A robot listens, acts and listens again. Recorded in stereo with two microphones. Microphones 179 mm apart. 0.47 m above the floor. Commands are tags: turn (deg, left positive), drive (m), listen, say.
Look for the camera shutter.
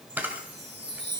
<turn deg="-30"/>
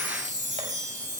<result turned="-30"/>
<listen/>
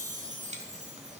<listen/>
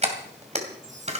<turn deg="-140"/>
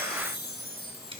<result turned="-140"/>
<listen/>
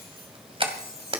<turn deg="-30"/>
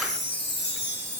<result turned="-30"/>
<listen/>
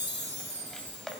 <listen/>
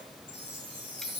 <say>I heard a camera shutter from this way, but can't make it out now.</say>